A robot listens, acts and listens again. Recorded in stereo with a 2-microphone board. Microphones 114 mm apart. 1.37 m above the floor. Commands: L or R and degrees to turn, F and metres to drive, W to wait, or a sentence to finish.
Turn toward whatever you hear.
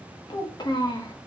L35
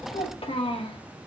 L125
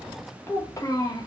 L35
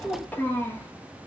L20
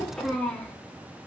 L10
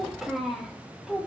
Facing the child speaking.